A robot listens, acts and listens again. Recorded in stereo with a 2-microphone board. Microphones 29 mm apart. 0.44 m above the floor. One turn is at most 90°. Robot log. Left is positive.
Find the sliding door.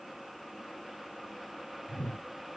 cmd idle
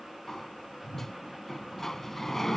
note: The sliding door: about 15° left or 165° left.
cmd yaw +15
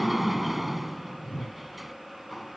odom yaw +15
end: Found it: a sliding door, straight ahead.